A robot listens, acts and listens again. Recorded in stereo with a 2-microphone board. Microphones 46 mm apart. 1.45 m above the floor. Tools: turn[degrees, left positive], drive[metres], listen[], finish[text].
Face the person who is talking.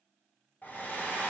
Action: listen[]
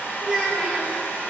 Action: turn[30]
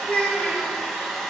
Thought: So it is at 140° left.
Action: turn[140]
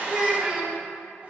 Thought: The child speaking is now 15° right.
Action: turn[-15]
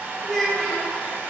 Action: finish[Facing the child speaking, 1 to 2 m away.]